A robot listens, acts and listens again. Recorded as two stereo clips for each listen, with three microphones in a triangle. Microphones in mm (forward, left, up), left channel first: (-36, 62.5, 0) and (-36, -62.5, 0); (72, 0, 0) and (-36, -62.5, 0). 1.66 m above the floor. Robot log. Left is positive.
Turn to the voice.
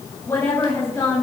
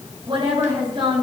note: The woman speaking: 160° left.
cmd yaw +160
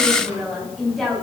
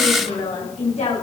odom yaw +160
end: Found it: a woman speaking, straight ahead, over 4 m away.